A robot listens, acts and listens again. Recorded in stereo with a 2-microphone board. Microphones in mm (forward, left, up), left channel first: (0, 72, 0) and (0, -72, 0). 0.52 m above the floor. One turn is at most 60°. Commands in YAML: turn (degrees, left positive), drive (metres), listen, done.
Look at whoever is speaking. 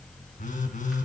listen: true
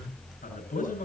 turn: 60
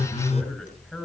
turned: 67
turn: 10
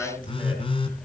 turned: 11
done: "Found it: a man speaking, straight ahead, over 4 m away."